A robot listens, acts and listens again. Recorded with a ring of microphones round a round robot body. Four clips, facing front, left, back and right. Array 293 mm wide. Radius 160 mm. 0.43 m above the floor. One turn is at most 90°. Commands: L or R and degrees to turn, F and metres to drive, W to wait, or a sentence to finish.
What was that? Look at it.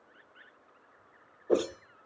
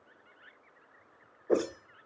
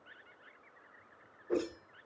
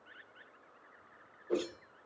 L40
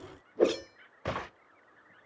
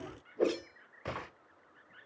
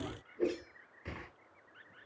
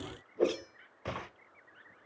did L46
Found it: a whoosh, straight ahead.